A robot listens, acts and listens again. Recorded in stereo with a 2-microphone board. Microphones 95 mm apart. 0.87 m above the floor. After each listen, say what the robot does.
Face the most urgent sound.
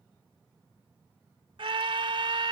Turn 65° right.
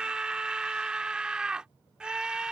Turn 10° right.
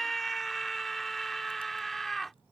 Facing the scream.